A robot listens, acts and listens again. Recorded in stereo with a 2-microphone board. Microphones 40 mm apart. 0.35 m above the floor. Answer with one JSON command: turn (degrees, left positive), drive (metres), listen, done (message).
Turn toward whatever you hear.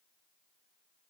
{"listen": true}
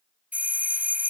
{"turn": -40}
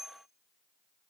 {"listen": true}
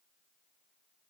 {"listen": true}
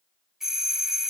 {"turn": -10}
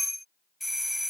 {"done": "Found it: a doorbell, straight ahead."}